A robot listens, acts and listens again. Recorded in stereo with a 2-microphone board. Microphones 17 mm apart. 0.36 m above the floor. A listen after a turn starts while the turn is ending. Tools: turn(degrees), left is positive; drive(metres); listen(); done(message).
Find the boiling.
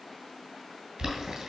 turn(degrees=-50)
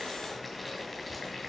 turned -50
done("Facing the boiling, 2 to 4 m away.")